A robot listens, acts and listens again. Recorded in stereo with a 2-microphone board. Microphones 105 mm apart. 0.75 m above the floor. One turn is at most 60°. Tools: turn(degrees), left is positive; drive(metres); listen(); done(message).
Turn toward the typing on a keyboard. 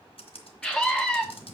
turn(degrees=60)
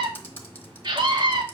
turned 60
turn(degrees=20)
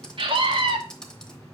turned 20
turn(degrees=10)
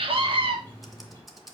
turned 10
done("Found it: typing on a keyboard, straight ahead.")